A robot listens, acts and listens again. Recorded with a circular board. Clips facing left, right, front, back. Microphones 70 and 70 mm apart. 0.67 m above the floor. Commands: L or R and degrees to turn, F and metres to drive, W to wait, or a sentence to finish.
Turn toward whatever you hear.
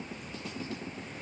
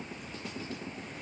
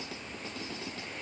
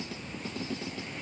W
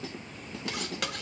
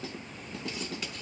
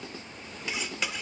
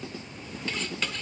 L80
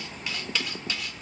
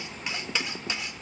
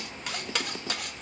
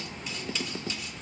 R20
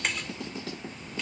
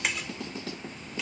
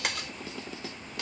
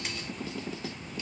Facing the cutlery clinking.